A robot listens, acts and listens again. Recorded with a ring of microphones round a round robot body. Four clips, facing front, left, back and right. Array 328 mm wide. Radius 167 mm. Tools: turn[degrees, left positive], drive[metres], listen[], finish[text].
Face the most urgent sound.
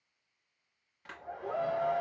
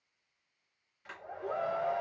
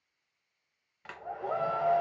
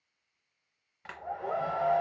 Thought: The shout: 160° right.
Action: turn[-160]
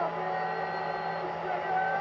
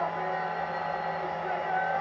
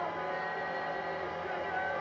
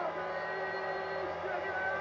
Thought: The shout is now 20° left.
Action: turn[20]
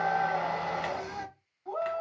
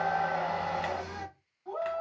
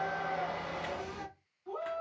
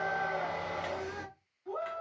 Action: finish[Found it: a shout, straight ahead, 2 to 4 m away.]